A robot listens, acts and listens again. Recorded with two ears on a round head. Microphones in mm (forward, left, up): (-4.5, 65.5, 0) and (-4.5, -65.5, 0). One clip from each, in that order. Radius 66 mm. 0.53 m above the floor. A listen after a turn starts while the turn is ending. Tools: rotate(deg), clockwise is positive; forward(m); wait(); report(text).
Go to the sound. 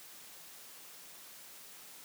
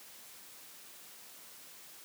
wait()
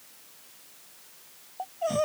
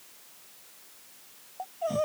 rotate(-30)
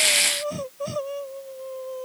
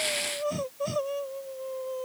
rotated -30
forward(1.0)
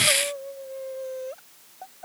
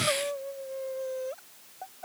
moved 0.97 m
forward(1.0)
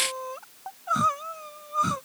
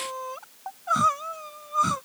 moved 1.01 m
rotate(15)
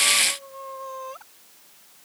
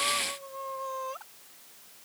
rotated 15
forward(1.0)
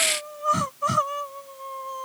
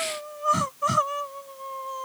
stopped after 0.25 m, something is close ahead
report("I am next to the crying.")